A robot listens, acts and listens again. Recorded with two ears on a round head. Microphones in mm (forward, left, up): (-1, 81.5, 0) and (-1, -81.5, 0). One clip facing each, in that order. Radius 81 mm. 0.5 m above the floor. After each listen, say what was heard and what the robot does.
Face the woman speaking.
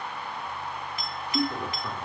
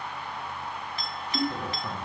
The woman speaking: about 20° right or 160° right. Turn 20° right.
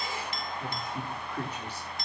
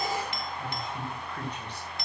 Facing the woman speaking, over 4 m away.